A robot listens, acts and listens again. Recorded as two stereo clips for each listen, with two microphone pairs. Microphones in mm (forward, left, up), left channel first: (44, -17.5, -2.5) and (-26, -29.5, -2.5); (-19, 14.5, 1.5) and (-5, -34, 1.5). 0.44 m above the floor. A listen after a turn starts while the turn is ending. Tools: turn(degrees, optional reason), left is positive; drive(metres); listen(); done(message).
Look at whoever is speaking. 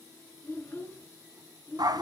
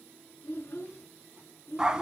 turn(degrees=70, reason="The child speaking: 70° left.")
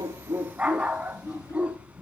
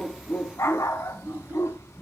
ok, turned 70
turn(degrees=-25, reason="The child speaking is now 25° right.")
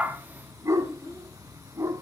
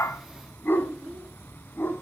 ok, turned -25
done("Facing the child speaking.")